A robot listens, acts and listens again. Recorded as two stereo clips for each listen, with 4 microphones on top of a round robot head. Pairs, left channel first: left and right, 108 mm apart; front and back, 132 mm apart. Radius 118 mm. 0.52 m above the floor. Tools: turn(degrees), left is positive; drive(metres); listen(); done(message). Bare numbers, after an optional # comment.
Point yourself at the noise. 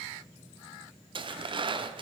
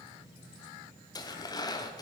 # The tearing paper: 55° right.
turn(-55)
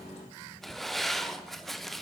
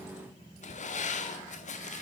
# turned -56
done("Facing the tearing paper, under 1 m away.")